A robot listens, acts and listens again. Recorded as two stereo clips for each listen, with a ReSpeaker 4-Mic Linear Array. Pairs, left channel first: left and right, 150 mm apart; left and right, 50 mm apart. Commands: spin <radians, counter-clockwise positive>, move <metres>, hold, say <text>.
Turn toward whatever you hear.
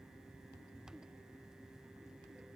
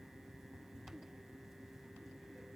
hold
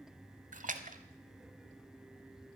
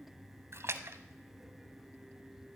spin -1.05
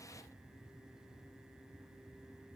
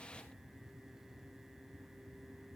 hold
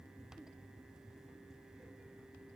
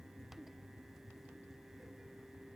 say I heard a splash, but can't make it out now. It was about straight ahead or 60° right.